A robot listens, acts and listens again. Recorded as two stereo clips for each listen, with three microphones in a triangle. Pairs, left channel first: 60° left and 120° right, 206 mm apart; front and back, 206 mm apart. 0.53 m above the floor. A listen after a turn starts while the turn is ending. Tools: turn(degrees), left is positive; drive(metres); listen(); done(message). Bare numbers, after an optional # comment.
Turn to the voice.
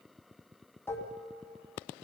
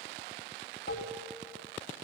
listen()
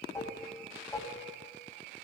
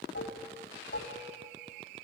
listen()
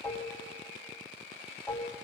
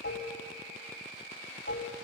done("I can't make out anyone speaking, only dishes clattering.")